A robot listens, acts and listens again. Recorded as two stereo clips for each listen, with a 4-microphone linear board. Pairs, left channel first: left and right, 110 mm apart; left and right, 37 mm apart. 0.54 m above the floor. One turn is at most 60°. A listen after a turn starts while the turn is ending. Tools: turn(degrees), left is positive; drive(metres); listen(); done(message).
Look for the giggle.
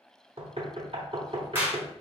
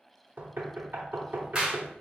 listen()
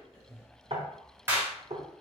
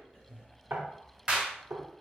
listen()
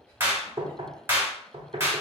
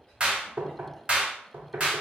done("I can't make out a giggle to turn to.")